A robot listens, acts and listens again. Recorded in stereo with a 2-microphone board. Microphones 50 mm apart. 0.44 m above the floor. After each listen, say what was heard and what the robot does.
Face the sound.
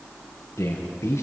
The man speaking: about 55° left or 125° left. Turn 55° left.
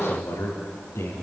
So it is at 80° left. Turn 80° left.
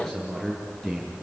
The man speaking is now 10° left. Turn 10° left.
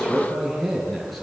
Found it: a man speaking, straight ahead, over 4 m away.